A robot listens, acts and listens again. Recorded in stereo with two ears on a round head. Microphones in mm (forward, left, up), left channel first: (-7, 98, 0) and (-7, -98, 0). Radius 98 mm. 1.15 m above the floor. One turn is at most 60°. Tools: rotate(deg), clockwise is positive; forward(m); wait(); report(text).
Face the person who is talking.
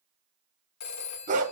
wait()
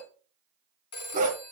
wait()
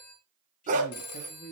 rotate(-35)
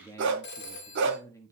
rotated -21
rotate(-15)
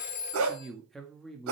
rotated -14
report("Facing the man speaking, 1 to 2 m away.")